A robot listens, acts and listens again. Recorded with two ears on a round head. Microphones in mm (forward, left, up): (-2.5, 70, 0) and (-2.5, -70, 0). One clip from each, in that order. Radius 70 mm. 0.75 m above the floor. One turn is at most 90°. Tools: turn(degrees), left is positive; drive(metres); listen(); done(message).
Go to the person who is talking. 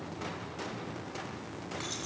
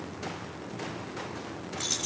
listen()
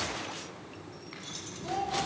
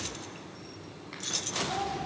turn(degrees=60)
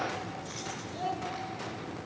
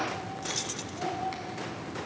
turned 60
turn(degrees=60)
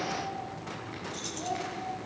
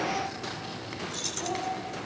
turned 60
turn(degrees=10)
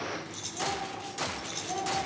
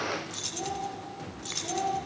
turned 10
drive(metres=1.0)
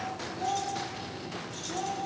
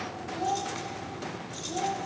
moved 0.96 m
drive(metres=1.0)
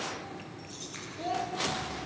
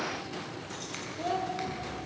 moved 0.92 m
drive(metres=1.0)
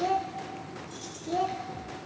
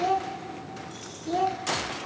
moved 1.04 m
turn(degrees=-10)
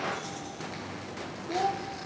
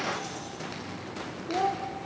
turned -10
drive(metres=1.0)
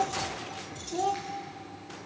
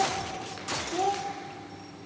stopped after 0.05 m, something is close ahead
done("Arrived at the child speaking, straight ahead.")